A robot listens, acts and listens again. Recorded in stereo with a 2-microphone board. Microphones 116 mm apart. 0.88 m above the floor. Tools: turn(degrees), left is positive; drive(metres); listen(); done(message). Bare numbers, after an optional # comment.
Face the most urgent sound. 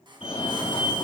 # The fire alarm: about 65° left or 115° left.
turn(65)
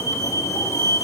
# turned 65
# So it is at 35° left.
turn(35)
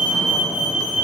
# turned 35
# The fire alarm is now 10° right.
turn(-10)
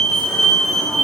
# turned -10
done("Facing the fire alarm, 2 to 4 m away.")